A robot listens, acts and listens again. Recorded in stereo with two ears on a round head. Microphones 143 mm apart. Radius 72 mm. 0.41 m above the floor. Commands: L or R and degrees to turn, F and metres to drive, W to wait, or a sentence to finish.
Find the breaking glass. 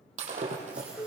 R50
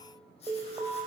W
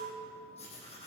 I heard breaking glass, but can't make it out now. It was about straight ahead or 80° right.